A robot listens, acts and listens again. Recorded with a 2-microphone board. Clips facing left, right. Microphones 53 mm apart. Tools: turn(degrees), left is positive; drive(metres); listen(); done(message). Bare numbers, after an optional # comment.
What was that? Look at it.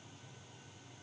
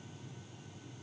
listen()
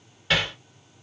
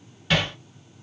turn(30)
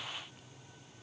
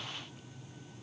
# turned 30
listen()
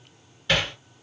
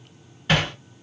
# So it is at 25° right.
turn(-25)
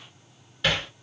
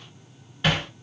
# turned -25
# The hammering is now 15° right.
turn(-15)
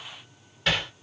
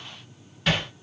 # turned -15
done("Found it: hammering, straight ahead, 2 to 4 m away.")